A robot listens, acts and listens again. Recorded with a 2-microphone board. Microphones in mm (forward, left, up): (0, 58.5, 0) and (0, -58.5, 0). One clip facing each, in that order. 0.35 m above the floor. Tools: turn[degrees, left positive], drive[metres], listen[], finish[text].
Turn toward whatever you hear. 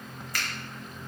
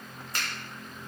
Thought: The finger snap: about 30° right or 150° right.
Action: turn[-30]
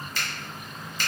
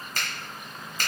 Thought: So it is at 110° right.
Action: turn[-110]
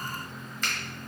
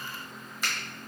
Thought: The finger snap is now 10° right.
Action: turn[-10]
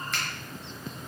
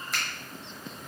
Action: finish[Found it: a finger snap, straight ahead.]